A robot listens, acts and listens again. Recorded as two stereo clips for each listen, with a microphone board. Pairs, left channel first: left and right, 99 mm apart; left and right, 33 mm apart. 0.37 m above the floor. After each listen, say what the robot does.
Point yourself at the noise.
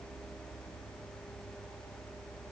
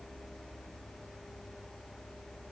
Keep listening.
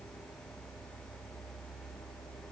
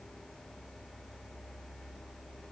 Keep listening.
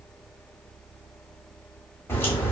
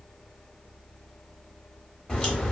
Turn 25° left.
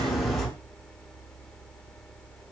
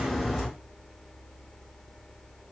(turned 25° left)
Found it: a crack, straight ahead.